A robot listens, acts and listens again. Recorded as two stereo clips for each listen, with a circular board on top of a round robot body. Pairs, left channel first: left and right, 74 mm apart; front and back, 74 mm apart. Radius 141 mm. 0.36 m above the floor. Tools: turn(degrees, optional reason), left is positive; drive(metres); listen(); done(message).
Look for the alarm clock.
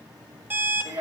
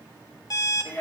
turn(degrees=-30, reason="The alarm clock: 30° right.")
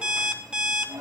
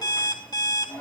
turn(degrees=-15, reason="The alarm clock is now 15° right.")
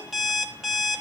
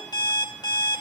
done("Facing the alarm clock.")